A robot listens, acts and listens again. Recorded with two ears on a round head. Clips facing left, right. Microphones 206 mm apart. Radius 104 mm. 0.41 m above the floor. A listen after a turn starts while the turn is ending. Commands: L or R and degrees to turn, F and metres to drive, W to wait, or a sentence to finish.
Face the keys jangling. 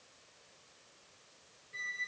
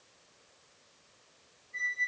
W
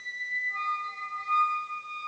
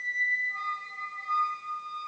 W
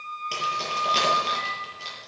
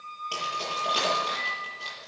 L35
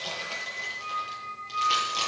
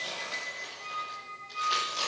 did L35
L105
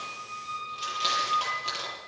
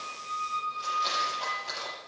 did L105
L45
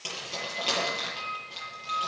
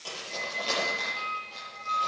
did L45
L15
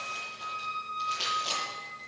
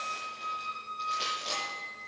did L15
Found it: keys jangling, straight ahead, over 4 m away.